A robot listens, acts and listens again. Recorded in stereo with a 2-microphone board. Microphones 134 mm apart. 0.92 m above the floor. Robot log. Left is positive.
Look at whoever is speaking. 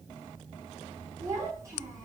note: The child speaking: about 20° right or 160° right.
cmd yaw -20
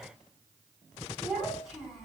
end: Found it: a child speaking, straight ahead, over 4 m away.